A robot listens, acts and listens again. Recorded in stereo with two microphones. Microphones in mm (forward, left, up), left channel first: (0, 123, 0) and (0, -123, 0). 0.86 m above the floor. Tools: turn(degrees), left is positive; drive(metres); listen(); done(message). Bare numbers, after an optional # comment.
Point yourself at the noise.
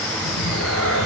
# The cat meowing: about 70° left or 110° left.
turn(70)
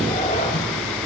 # So it is at 30° left.
turn(30)
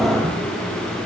listen()
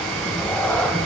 done("Facing the cat meowing.")